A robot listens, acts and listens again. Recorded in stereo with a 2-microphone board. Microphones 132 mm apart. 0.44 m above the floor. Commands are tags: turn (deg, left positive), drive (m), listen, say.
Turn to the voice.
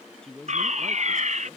<turn deg="30"/>
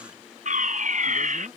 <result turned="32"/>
<listen/>
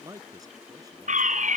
<turn deg="-30"/>
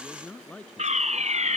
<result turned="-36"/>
<turn deg="10"/>
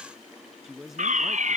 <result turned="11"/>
<say>Found it: a man speaking, straight ahead.</say>